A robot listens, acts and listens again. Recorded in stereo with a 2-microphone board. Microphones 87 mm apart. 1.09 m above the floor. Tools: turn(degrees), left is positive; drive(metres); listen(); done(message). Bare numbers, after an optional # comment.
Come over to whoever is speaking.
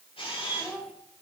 turn(30)
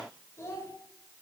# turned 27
# So it is at 150° left.
turn(150)
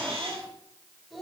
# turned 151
drive(1.0)
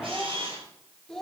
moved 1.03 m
drive(1.0)
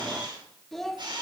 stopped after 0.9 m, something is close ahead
done("Arrived at the child speaking, straight ahead.")